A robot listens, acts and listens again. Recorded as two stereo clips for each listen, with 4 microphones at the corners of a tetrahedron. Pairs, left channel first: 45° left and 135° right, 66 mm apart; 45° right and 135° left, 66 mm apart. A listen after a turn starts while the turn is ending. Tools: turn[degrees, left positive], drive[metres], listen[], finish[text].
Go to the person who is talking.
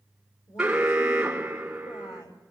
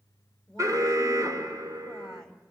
Thought: The woman speaking: 35° left.
Action: turn[35]
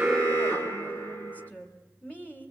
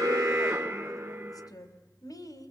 Thought: The woman speaking is now 25° right.
Action: turn[-25]
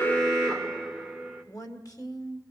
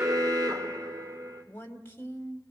Thought: The woman speaking is now 15° left.
Action: turn[15]
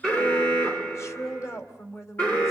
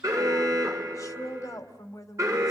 Action: drive[1.0]
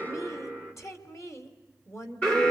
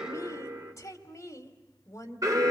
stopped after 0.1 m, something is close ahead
Action: finish[Blocked. The woman speaking is further on, straight ahead.]